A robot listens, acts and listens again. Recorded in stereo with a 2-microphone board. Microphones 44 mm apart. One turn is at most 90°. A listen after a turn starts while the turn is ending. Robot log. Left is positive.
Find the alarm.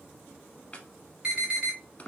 note: The alarm: about 20° right or 160° right.
cmd yaw -20
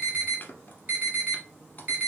note: So it is at 140° right.
cmd yaw -90
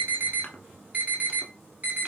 note: The alarm is now 35° right.
cmd yaw -35
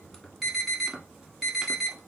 end: Facing the alarm, 1 to 2 m away.